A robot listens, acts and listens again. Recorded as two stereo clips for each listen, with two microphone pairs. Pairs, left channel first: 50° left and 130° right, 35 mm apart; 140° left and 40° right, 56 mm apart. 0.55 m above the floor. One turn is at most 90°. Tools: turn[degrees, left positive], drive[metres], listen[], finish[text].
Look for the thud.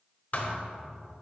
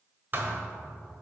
Thought: The thud: 10° left.
Action: turn[10]
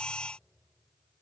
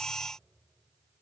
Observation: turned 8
Action: finish[Facing where the thud came from. I can't hear it now.]